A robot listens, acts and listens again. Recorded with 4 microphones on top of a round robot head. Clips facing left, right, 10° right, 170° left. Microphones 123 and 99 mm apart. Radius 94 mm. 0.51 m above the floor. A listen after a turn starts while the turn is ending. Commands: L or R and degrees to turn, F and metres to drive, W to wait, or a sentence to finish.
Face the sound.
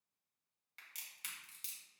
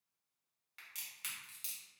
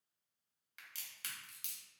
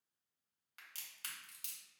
L135
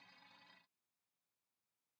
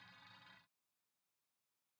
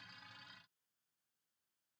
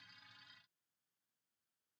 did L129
Facing where the crack came from. I can't hear it now.